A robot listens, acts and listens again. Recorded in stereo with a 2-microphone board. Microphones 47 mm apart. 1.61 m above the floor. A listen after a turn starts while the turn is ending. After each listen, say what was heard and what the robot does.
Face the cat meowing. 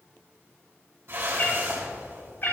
The cat meowing: about 50° left or 130° left. Turn 50° left.
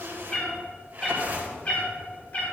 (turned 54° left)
So it is at 35° left. Turn 35° left.
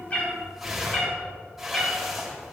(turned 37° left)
The cat meowing is now 25° left. Turn 25° left.
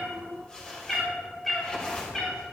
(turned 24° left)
Found it: a cat meowing, straight ahead.